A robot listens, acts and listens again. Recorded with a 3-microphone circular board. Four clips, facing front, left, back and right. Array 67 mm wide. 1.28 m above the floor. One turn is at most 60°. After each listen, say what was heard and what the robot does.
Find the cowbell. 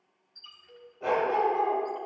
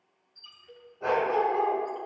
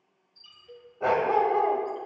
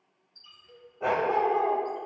The cowbell: 155° left. Turn 60° left.
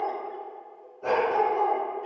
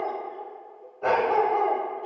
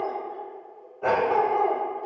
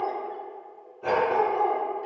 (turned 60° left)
Nothing new. It was at 95° left. Turn 60° left.
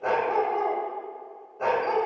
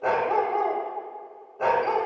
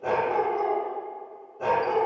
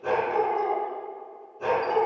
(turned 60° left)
Nothing new. It was at 35° left. Turn 35° left.
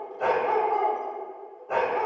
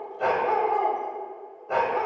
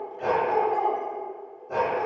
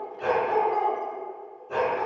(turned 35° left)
Facing where the cowbell came from. I can't hear it now.